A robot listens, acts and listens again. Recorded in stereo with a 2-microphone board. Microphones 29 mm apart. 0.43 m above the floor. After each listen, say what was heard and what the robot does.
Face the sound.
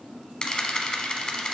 The camera shutter: about 30° left or 150° left. Turn 30° left.
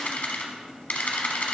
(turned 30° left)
So it is at 120° left. Turn 120° left.
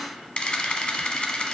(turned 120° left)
The camera shutter is now 35° left. Turn 35° left.
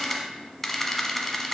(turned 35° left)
The camera shutter is now 10° left. Turn 10° left.
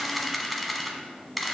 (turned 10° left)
Facing the camera shutter, under 1 m away.